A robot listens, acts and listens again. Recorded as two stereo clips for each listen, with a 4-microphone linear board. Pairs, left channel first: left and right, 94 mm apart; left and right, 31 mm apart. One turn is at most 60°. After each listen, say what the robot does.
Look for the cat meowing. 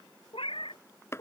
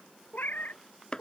Turn 60° left.
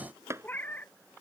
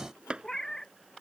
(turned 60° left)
Turn 20° left.
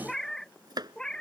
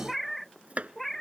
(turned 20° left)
Turn 10° left.
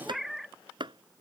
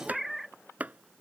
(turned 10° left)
Found it: a cat meowing, straight ahead.